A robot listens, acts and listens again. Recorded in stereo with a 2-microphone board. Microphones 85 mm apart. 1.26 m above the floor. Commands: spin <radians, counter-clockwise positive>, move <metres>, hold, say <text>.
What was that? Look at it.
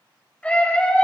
spin 0.52
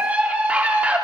spin -0.26
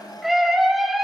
say Facing the scream, 2 to 4 m away.